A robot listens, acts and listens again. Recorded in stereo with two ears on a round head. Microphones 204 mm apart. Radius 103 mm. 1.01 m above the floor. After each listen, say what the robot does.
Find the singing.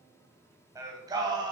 Turn 20° right.
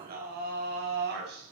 Turn 130° right.
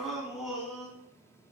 Found it: singing, straight ahead.